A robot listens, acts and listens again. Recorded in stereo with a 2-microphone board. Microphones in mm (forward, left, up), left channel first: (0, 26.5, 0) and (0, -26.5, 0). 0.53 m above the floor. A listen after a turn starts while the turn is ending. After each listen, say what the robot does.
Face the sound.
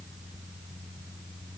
Keep listening.
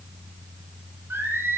Turn 50° right.
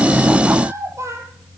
Turn 70° right.
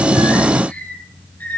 Turn 35° left.
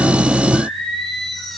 Facing the singing, 2 to 4 m away.